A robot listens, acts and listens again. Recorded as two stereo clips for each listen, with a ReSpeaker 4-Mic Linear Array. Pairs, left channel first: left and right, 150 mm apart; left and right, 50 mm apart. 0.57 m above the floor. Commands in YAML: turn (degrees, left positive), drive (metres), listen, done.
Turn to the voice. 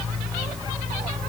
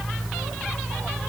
listen: true
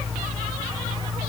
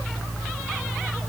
listen: true
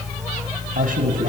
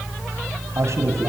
turn: -70
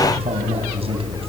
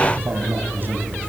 turn: -40
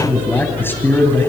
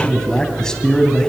turn: 15
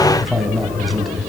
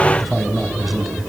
done: "Found it: a man speaking, straight ahead."